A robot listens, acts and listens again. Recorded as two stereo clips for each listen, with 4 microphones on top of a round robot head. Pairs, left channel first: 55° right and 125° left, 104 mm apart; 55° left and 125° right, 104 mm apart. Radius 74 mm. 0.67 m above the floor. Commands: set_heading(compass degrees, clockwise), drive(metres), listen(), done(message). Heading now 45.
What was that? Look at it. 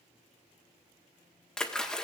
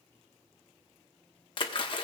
set_heading(15)
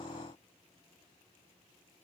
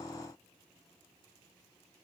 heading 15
done("I heard a splash from this way, but can't make it out now.")